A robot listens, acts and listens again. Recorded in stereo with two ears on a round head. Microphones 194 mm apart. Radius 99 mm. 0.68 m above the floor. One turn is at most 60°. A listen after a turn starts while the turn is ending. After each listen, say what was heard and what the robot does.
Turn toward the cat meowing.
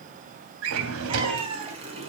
The cat meowing: about 25° right or 155° right. Turn 25° right.
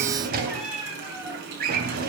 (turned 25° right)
Found it: a cat meowing, straight ahead, 2 to 4 m away.